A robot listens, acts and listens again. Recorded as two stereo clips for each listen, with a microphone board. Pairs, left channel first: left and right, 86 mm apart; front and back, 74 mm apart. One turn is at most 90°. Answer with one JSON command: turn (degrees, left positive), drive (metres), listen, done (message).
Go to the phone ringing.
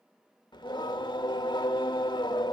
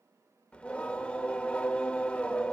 {"listen": true}
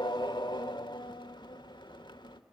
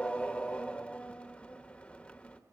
{"listen": true}
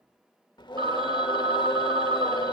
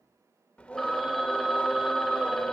{"turn": -85}
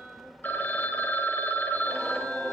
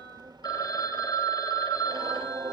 {"turn": 25}
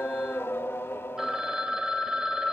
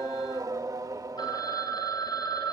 {"drive": 1.0}
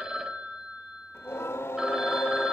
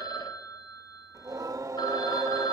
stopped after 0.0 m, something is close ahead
{"turn": -10}
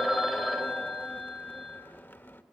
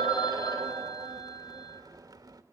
{"done": "Something is in my way. I am facing the phone ringing but have not reached it."}